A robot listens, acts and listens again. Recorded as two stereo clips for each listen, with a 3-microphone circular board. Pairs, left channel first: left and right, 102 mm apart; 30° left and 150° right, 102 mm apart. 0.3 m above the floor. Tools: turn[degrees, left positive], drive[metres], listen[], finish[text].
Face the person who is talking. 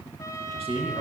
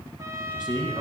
Thought: The man speaking: 110° right.
Action: turn[-110]
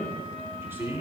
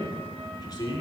Thought: The man speaking is now 20° right.
Action: turn[-20]
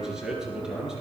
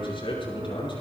Action: finish[Found it: a man speaking, straight ahead, over 4 m away.]